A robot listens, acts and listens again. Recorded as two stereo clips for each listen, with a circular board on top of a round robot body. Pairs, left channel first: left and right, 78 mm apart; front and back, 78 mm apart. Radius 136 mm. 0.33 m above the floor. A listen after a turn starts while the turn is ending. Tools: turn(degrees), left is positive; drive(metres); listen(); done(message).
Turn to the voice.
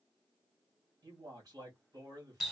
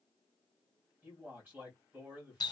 turn(degrees=-120)
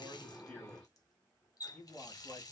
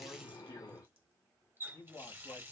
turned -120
done("Facing the man speaking, 1 to 2 m away.")